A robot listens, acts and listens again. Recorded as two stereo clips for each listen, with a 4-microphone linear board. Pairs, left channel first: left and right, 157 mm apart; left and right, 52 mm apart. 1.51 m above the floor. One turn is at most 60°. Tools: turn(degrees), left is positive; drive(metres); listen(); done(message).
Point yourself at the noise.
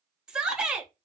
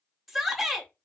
turn(degrees=-30)
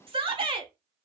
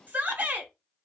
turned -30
turn(degrees=-60)
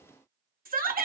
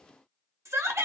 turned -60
turn(degrees=-60)
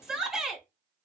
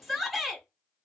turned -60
done("Found it: a shout, straight ahead.")